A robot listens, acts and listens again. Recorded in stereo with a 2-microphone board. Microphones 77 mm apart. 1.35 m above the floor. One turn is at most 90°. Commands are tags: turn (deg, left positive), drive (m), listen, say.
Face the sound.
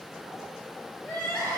<turn deg="30"/>
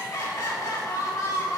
<turn deg="90"/>
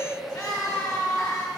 <turn deg="50"/>
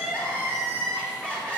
<turn deg="15"/>
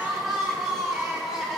<say>Facing the crying.</say>